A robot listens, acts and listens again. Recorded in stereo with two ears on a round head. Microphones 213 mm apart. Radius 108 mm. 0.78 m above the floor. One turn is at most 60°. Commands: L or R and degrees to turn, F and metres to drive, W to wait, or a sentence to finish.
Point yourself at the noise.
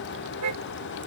R60
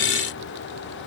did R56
R35
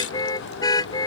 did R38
L15
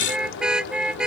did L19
Facing the car horn.